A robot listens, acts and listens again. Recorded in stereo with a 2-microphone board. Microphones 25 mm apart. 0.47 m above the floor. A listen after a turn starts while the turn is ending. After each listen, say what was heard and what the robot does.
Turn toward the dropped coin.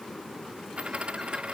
The dropped coin: about 50° right or 130° right. Turn 50° right.
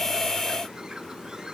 Keep listening.
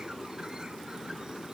I heard a dropped coin, but can't make it out now. It was about straight ahead or 80° right.